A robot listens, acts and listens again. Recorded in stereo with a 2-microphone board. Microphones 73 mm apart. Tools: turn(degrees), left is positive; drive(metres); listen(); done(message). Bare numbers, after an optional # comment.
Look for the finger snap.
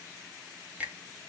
# The finger snap: about 20° right or 160° right.
turn(-20)
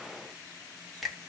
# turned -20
done("Found it: a finger snap, straight ahead.")